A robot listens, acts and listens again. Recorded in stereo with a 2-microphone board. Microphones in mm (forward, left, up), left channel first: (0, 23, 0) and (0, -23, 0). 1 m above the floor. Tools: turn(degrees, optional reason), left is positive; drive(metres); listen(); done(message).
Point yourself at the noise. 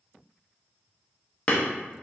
turn(degrees=30, reason="The hammering: about 30° left or 150° left.")
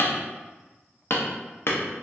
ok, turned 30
turn(degrees=115, reason="So it is at 115° left.")
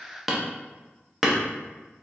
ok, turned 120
done("Found it: hammering, straight ahead, under 1 m away.")